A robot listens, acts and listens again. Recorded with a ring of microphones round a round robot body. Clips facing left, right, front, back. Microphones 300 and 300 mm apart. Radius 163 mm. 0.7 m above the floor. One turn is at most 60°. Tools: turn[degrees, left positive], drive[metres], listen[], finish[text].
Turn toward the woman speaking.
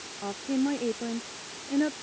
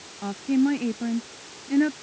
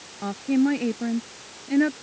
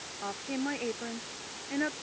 Thought: The woman speaking: 30° right.
Action: turn[-30]
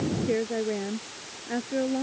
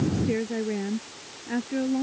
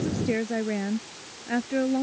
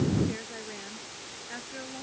Thought: The woman speaking is now 15° right.
Action: turn[-15]
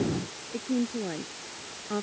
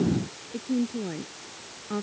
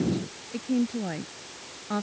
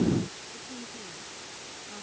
Action: finish[Found it: a woman speaking, straight ahead.]